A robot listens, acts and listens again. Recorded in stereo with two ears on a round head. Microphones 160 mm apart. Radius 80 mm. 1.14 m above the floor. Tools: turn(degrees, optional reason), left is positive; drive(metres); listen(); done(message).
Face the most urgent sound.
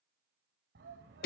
turn(degrees=-70, reason="The shout: about 70° right or 110° right.")
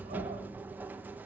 listen()
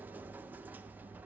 listen()
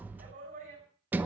turn(degrees=-45, reason="So it is at 45° right.")
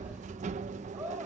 turn(degrees=-10, reason="The shout is now 10° right.")
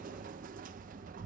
listen()
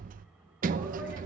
listen()
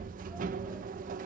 done("I heard a shout from this way, but can't make it out now.")